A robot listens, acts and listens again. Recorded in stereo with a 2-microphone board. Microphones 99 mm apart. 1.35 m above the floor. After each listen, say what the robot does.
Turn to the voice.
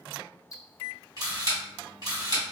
Keep listening.
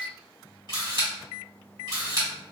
Keep listening.
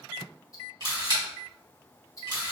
I can't make out anyone speaking to turn to.